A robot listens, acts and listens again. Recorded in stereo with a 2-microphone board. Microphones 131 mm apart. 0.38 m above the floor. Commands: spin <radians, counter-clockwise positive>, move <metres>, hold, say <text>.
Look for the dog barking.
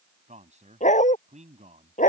spin 1.31
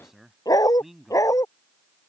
spin 0.44
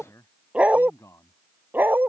spin -0.26
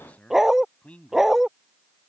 say Found it: a dog barking, straight ahead.